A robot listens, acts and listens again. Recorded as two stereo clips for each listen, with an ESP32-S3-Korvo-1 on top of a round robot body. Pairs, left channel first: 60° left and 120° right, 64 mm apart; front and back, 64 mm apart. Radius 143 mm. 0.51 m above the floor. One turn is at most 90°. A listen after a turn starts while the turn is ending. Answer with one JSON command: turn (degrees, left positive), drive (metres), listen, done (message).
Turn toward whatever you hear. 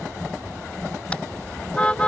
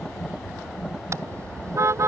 {"turn": 90}
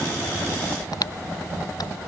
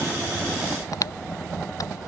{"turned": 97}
{"turn": 35}
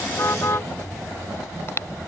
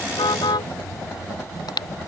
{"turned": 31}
{"done": "Found it: a car horn, straight ahead."}